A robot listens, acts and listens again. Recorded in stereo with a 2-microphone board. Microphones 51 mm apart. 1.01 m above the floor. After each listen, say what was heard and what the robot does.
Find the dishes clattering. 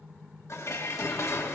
The dishes clattering: about 70° left or 110° left. Turn 70° left.
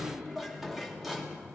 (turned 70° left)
Facing the dishes clattering, 1 to 2 m away.